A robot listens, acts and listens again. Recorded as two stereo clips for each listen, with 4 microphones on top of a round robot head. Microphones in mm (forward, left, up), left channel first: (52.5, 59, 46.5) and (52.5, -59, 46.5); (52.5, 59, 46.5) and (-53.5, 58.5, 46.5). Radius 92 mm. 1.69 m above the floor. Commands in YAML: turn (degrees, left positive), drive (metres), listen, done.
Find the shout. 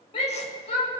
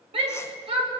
turn: 145
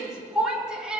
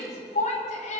done: "Found it: a shout, straight ahead."